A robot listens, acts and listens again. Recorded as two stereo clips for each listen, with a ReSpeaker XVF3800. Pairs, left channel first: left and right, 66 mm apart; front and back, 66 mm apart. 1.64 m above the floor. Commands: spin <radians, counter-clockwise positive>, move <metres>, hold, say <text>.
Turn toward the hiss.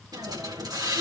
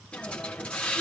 spin -1.31
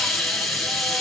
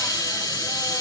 say Facing the hiss, 1 to 2 m away.